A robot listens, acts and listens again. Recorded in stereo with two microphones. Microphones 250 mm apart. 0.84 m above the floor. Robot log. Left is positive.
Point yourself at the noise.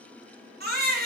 note: The baby crying: about 40° right or 140° right.
cmd yaw -40
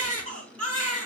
note: So it is at 100° right.
cmd yaw -100
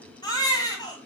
note: The baby crying is now 15° left.
cmd yaw +15
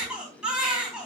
end: Facing the baby crying, 2 to 4 m away.